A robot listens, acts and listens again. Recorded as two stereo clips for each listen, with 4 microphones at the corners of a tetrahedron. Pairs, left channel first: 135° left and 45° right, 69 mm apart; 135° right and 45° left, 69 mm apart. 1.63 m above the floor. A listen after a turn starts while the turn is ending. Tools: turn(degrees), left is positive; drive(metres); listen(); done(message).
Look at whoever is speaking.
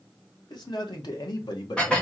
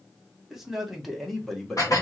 turn(degrees=140)
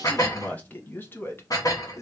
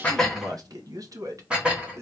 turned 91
turn(degrees=90)
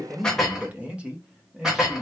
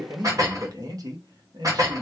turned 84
turn(degrees=40)
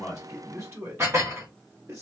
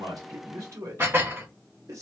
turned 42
done("Facing the man speaking.")